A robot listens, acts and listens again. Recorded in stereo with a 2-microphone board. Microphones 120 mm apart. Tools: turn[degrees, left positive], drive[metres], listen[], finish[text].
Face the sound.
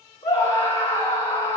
Thought: The scream: about 55° left or 125° left.
Action: turn[55]
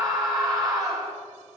Action: finish[Found it: a scream, straight ahead.]